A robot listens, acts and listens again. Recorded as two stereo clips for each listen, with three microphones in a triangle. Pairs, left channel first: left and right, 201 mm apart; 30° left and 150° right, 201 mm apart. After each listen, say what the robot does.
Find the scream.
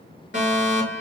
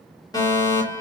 Keep listening.
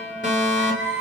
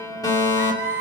Turn 130° left.
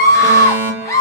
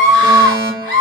Turn 15° left.
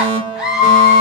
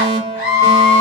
Found it: a scream, straight ahead.